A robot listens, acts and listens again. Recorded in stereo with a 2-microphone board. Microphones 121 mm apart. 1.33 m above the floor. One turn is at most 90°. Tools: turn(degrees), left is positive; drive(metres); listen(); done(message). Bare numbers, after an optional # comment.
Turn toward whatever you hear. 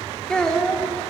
turn(30)
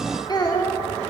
# So it is at 145° left.
turn(90)
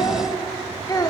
# The child speaking is now 35° left.
turn(35)
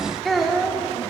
done("Found it: a child speaking, straight ahead.")